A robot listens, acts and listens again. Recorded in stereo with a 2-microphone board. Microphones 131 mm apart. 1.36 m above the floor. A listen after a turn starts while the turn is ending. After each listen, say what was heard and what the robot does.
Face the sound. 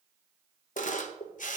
The camera shutter: about 70° left or 110° left. Turn 70° left.
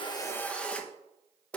So it is at 10° left. Turn 10° left.
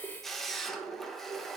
Facing the camera shutter.